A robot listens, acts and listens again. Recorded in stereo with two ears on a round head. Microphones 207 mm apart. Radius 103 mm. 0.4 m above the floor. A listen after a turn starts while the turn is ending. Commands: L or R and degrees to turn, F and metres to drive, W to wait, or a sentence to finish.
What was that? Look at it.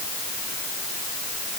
W
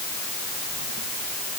W
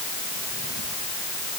I can't make out anything to turn to.